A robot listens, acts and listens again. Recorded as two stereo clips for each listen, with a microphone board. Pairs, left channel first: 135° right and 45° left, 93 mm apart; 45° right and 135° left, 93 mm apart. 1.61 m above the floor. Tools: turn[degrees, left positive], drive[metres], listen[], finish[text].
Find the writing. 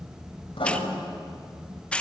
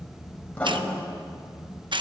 Thought: The writing: 120° right.
Action: turn[-120]
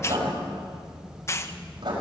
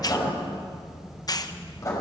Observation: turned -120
Thought: The writing is now 10° left.
Action: turn[10]
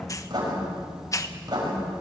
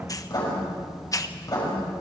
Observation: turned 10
Action: finish[Found it: writing, straight ahead, over 4 m away.]